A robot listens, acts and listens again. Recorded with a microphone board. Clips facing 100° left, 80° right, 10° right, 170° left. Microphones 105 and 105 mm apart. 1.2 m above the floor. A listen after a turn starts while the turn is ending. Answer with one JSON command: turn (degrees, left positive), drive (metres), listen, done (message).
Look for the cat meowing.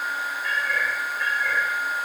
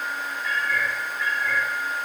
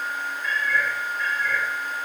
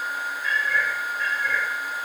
{"turn": 115}
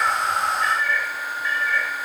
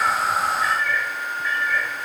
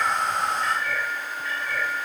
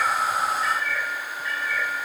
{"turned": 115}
{"done": "Facing the cat meowing."}